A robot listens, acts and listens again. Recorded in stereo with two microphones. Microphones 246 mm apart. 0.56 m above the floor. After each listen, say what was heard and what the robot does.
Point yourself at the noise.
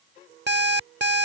The alarm clock: about 45° right or 135° right. Turn 45° right.
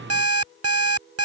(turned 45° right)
So it is at 85° right. Turn 85° right.
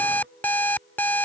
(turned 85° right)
The alarm clock is now 10° left. Turn 10° left.
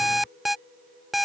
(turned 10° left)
Facing the alarm clock.